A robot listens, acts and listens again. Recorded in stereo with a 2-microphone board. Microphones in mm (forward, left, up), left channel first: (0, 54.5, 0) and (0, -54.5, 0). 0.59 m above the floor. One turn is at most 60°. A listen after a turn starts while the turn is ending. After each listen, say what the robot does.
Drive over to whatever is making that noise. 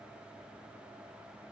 Keep listening.
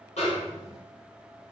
Turn 60° left.
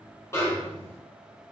Turn 25° left.
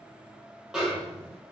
Drive 1.0 m forward.
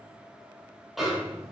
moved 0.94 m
Drive 1.0 m forward.
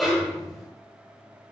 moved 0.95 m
Drive 1.0 m forward.
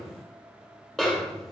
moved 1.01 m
Drive 1.0 m forward.
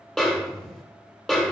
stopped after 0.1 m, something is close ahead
I am next to the snare drum.